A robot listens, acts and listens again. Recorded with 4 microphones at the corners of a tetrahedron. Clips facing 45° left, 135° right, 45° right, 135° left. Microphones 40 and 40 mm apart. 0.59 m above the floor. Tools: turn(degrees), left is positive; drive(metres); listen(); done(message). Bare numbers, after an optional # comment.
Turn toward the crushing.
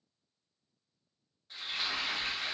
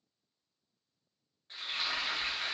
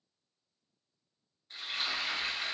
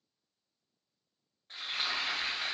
listen()
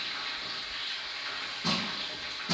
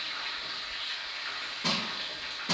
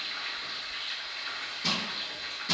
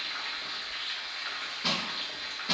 # The crushing: 155° right.
turn(-155)
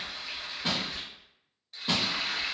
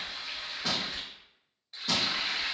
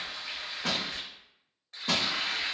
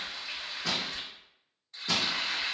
# The crushing is now 15° right.
turn(-15)
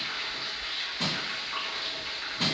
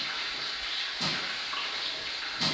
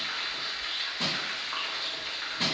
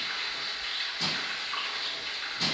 done("Facing the crushing.")